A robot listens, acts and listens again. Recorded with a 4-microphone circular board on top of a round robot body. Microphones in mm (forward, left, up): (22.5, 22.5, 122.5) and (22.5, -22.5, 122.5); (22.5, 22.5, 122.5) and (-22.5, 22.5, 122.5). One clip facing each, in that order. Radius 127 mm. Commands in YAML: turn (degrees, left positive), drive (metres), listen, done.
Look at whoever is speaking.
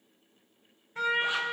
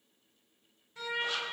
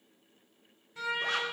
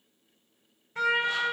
listen: true
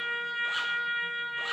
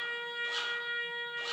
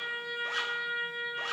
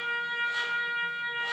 listen: true
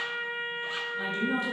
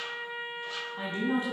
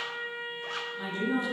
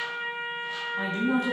turn: -145
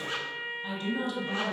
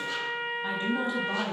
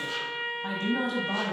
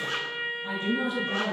turn: -25
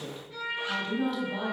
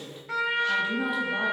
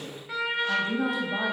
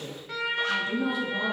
turn: -10
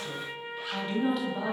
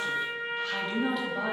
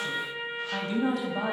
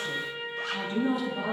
done: "Facing the woman speaking, 2 to 4 m away."